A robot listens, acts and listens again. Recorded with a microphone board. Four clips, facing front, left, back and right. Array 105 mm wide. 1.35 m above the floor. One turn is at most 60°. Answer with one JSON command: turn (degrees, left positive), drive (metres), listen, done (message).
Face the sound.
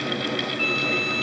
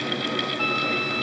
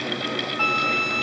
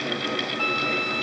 {"turn": 60}
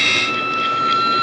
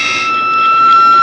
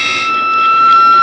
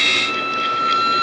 {"turn": 60}
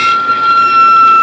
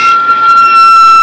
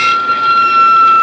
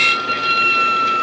{"turn": 60}
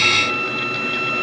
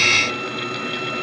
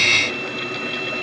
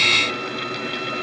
{"turn": 10}
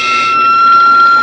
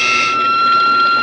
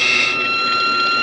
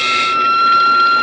{"done": "Facing the flute."}